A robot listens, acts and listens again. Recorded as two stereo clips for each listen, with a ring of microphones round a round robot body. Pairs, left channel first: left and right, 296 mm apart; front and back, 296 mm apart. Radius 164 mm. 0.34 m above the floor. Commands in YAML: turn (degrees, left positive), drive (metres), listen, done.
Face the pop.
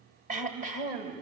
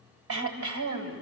listen: true
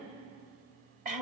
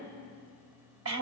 listen: true
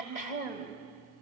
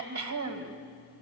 done: "I can't make out a pop to turn to."